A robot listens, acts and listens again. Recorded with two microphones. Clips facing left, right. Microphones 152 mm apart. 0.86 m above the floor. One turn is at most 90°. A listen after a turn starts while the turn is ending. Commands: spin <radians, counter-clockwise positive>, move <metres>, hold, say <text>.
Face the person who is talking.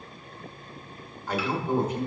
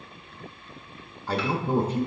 spin -0.61
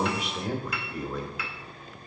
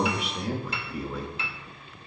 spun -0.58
say Found it: a man speaking, straight ahead.